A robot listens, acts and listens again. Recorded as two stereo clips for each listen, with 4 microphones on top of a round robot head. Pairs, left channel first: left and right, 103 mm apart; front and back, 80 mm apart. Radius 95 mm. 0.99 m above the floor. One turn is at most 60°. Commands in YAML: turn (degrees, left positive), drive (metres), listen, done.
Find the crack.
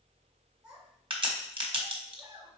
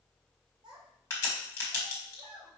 turn: -55
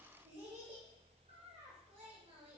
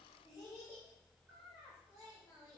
done: "Facing where the crack came from. I can't hear it now."